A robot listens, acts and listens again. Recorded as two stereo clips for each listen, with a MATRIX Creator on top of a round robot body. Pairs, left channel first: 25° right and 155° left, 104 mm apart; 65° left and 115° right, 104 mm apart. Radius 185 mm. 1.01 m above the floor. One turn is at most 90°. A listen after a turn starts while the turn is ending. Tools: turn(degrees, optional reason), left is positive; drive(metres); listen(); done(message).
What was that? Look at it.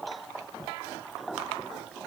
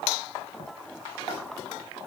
listen()
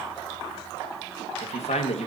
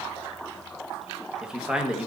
turn(degrees=-30, reason="The man speaking: 30° right.")
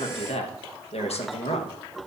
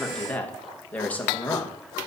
turn(degrees=-10, reason="The man speaking is now 10° right.")
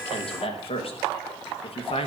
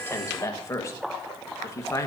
done("Found it: a man speaking, straight ahead.")